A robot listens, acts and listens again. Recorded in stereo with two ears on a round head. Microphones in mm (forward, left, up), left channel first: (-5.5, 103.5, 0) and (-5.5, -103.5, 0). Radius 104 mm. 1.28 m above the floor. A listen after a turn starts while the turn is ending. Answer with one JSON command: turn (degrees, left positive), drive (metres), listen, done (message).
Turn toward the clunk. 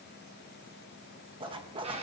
{"listen": true}
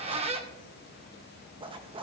{"listen": true}
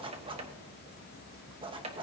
{"done": "I can't make out a clunk, only a zipper and a squeak."}